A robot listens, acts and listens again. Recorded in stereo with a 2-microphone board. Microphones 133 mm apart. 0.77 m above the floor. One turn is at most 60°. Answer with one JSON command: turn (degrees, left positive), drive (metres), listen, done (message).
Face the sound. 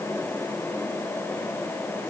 {"listen": true}
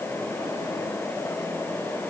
{"listen": true}
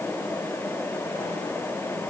{"done": "I can't make out anything to turn to."}